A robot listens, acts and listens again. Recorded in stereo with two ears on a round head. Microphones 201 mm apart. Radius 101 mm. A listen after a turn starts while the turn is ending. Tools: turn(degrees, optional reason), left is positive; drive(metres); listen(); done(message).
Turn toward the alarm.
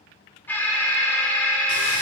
turn(degrees=30)
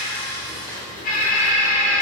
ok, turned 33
turn(degrees=140, reason="So it is at 140° left.")
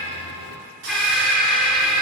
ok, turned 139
done("Facing the alarm.")